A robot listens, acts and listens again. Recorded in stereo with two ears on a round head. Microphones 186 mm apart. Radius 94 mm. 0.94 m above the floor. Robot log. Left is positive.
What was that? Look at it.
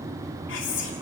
note: The whispering: about 70° left or 110° left.
cmd yaw +70
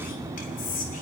note: So it is at 40° left.
cmd yaw +40
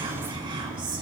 note: The whispering is now 25° right.
cmd yaw -25
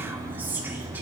note: The whispering is now 10° right.
cmd yaw -10
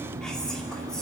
cmd idle
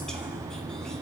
cmd idle
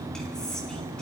end: Facing the whispering.